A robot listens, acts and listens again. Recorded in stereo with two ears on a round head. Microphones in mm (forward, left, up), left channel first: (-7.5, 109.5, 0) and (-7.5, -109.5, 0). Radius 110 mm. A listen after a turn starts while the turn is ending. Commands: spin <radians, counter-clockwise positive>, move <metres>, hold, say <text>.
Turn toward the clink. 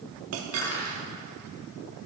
spin -1.13
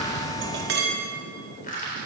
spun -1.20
spin -0.79
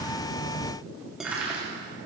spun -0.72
say Found it: a clink, straight ahead, 2 to 4 m away.